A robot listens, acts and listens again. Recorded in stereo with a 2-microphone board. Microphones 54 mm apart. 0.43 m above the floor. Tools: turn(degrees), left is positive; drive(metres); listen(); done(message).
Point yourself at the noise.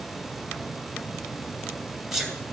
turn(degrees=-30)
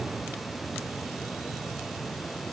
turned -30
listen()
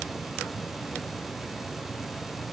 done("I heard a sneeze, but can't make it out now. It was about 20° left or 140° right.")